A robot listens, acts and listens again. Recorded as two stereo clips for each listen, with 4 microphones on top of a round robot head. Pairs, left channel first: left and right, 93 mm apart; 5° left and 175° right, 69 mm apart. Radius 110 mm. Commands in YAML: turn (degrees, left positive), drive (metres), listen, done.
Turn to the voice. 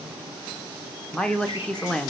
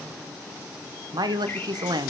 turn: 170
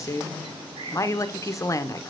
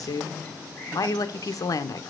turn: 35
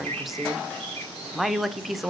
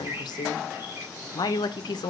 done: "Facing the woman speaking, 1 to 2 m away."